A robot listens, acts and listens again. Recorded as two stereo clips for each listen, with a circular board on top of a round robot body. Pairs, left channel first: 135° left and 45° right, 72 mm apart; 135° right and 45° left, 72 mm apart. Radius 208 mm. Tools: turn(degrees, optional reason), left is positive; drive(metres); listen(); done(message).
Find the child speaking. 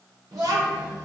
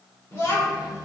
turn(degrees=-90, reason="The child speaking: 90° right.")
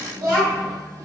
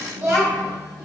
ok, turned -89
turn(degrees=-10, reason="The child speaking is now 10° right.")
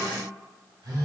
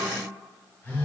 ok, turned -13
listen()
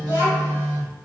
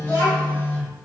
done("Found it: a child speaking, straight ahead.")